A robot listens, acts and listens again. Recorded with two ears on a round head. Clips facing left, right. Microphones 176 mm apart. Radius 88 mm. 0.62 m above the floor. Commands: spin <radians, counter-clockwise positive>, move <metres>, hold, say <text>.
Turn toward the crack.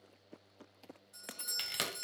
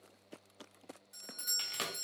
spin 0.35
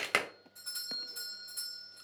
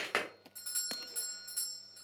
spin 2.36
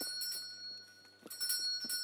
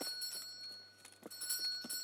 say I heard a crack from this way, but can't make it out now.